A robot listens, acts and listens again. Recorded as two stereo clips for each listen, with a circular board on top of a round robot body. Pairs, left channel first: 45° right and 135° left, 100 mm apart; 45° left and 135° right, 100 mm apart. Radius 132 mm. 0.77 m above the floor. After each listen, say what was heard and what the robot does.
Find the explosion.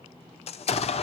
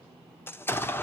The explosion: 25° right. Turn 25° right.
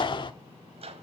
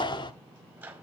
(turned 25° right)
Found it: an explosion, straight ahead, 1 to 2 m away.